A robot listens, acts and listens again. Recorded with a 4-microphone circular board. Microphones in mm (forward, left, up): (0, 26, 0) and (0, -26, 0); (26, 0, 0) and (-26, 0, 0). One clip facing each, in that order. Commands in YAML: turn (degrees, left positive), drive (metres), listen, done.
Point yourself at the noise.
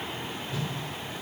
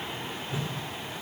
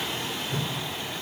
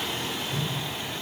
turn: -25
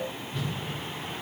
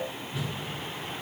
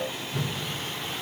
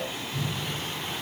done: "Found it: a whoosh, straight ahead, under 1 m away."